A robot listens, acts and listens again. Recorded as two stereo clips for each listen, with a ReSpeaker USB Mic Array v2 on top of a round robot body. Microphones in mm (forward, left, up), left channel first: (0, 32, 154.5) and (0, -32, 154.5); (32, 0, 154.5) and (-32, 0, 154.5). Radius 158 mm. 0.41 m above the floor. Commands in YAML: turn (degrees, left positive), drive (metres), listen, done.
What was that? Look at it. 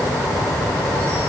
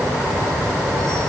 listen: true
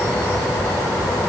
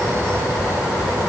listen: true
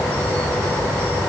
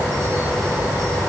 done: "I can't make out anything."